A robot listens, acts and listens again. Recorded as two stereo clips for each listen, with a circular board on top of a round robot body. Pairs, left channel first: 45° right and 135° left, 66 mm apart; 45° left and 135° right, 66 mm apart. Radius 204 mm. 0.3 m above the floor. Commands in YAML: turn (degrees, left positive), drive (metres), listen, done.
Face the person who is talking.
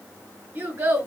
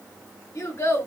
turn: 90
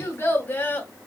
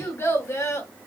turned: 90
turn: 15
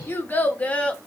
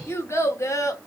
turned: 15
turn: 25
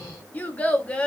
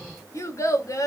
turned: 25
turn: 25
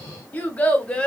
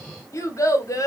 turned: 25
turn: 25
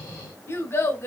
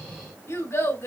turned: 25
done: "Found it: a child speaking, straight ahead."